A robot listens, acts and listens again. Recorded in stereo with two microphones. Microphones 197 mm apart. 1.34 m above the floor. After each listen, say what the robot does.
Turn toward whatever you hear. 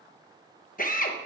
Turn 45° left.
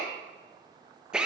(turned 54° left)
Facing the drill.